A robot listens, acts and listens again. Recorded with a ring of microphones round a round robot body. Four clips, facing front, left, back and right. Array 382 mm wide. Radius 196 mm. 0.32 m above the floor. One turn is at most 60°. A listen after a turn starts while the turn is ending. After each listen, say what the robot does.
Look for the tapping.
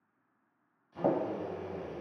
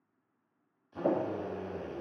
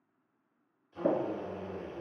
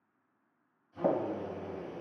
Turn 40° right.
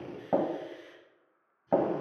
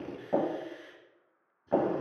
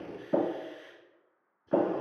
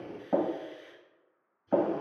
Facing the tapping.